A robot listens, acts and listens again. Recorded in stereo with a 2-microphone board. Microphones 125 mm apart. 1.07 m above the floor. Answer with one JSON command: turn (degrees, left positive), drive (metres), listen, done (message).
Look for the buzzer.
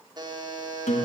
{"turn": -35}
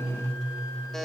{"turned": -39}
{"done": "Found it: a buzzer, straight ahead."}